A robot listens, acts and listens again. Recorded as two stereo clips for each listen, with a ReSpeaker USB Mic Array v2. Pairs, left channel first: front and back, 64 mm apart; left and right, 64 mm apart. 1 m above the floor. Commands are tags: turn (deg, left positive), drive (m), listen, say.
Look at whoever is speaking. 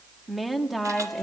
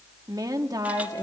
<turn deg="-90"/>
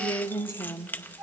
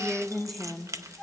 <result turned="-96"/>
<say>Facing the woman speaking.</say>